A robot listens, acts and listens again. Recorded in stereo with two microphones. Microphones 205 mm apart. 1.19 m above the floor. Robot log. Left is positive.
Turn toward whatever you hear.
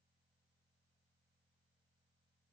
cmd idle
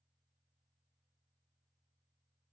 cmd idle
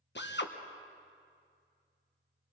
note: The drill: about 60° left or 120° left.
cmd yaw +60
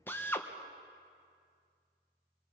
note: So it is at 10° left.
cmd yaw +10
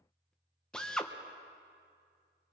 end: Facing the drill.